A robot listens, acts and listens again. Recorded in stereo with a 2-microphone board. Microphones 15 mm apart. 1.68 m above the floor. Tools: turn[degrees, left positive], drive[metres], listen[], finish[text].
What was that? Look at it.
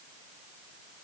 Action: listen[]
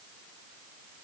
Action: listen[]
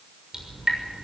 Thought: The dripping: about 35° right or 145° right.
Action: turn[-35]
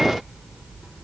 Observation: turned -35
Thought: So it is at 110° right.
Action: turn[-110]
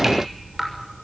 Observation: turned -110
Thought: The dripping is now 25° right.
Action: turn[-25]
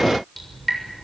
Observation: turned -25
Action: finish[Facing the dripping, over 4 m away.]